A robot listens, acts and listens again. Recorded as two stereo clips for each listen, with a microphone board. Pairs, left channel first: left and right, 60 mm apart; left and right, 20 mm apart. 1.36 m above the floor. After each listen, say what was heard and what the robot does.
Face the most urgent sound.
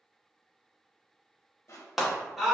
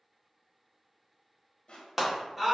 Turn 30° right.
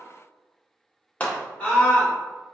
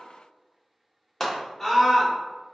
So it is at 20° left. Turn 20° left.
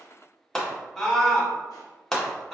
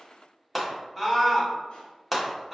The scream is now 10° left. Turn 10° left.
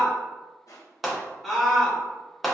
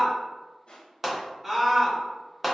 Found it: a scream, straight ahead.